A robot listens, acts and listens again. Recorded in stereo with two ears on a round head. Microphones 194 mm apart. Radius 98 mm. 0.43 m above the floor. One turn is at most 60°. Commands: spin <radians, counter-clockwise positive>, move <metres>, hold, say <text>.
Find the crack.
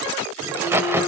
spin -0.52
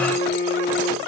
hold
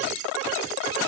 say I heard a crack, but can't make it out now. It was about 20° left or 140° right.